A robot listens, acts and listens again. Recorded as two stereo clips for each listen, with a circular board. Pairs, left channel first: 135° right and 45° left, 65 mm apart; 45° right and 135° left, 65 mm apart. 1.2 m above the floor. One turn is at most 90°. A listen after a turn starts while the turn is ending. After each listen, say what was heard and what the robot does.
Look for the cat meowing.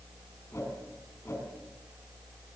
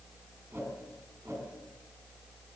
Keep listening.
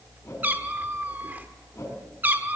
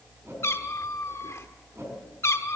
The cat meowing: 10° right. Turn 10° right.
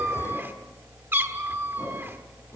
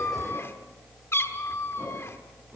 Facing the cat meowing.